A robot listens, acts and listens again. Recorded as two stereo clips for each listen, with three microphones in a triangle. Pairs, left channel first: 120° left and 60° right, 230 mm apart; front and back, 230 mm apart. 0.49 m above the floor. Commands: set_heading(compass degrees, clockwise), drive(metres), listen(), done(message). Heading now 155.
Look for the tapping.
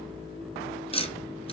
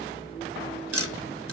set_heading(330)
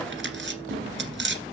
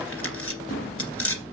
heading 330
set_heading(350)
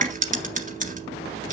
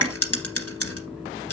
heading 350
done("Facing the tapping, 1 to 2 m away.")